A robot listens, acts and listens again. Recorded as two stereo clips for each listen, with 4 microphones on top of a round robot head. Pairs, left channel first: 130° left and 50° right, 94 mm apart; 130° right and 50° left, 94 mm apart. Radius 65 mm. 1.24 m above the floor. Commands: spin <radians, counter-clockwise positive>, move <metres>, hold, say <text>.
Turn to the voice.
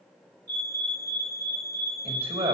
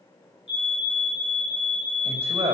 spin -0.35
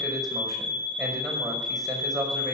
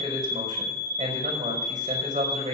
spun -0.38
say Facing the man speaking, over 4 m away.